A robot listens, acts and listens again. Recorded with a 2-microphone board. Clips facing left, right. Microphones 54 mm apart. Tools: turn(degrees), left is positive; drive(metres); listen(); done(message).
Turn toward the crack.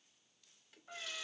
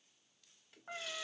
listen()
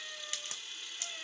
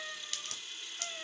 turn(degrees=20)
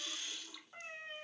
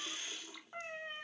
listen()
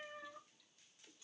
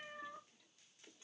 done("I heard a crack, but can't make it out now. It was about straight ahead or 140° left.")